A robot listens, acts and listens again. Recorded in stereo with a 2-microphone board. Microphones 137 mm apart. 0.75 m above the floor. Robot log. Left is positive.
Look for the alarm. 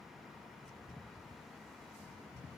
cmd idle
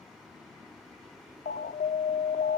cmd yaw +90
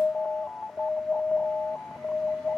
end: Found it: an alarm, straight ahead.